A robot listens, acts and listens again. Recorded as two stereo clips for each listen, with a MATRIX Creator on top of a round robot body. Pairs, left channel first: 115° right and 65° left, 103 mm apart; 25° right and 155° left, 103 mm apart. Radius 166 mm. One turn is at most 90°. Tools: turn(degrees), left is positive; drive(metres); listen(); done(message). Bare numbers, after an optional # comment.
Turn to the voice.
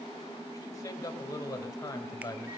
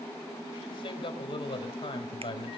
# The man speaking: 55° right.
turn(-55)
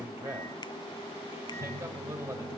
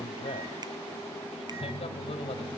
done("Found it: a man speaking, straight ahead, over 4 m away.")